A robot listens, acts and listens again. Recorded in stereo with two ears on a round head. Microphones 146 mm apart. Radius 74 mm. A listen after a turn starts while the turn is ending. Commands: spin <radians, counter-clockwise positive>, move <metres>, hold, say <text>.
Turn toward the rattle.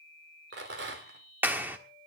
spin -1.57
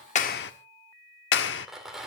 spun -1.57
say Found it: a rattle, straight ahead.